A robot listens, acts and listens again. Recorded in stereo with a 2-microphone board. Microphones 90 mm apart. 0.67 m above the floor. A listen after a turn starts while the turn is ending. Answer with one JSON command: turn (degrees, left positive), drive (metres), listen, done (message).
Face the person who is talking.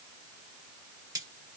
{"listen": true}
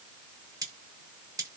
{"listen": true}
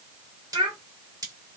{"turn": -75}
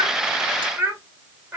{"turn": -20}
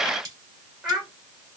{"done": "Facing the child speaking."}